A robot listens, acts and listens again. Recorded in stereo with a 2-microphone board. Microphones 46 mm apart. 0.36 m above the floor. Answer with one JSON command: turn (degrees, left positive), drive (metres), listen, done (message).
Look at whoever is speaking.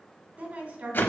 {"turn": -40}
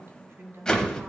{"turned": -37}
{"turn": -100}
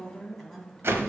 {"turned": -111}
{"turn": 10}
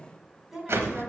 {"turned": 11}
{"done": "Facing the woman speaking, 2 to 4 m away."}